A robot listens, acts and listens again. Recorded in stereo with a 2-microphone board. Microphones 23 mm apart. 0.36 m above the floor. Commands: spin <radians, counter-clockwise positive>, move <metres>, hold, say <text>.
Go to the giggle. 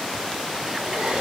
hold
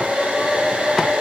hold
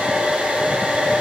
say I can't make out a giggle to turn to.